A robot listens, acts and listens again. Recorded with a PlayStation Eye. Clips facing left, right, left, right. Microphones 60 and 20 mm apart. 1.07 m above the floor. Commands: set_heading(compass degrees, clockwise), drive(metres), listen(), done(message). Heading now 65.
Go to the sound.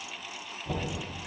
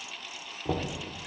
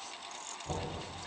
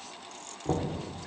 set_heading(155)
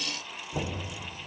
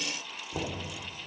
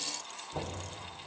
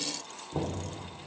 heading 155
set_heading(165)
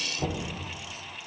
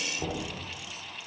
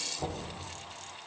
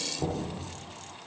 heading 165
drive(1.0)
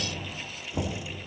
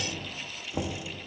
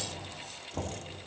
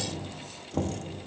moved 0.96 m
set_heading(175)
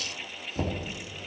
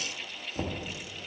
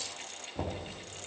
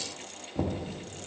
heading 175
drive(1.0)
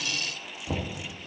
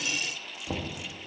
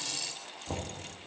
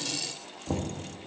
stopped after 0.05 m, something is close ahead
done("Arrived at the knocking, straight ahead.")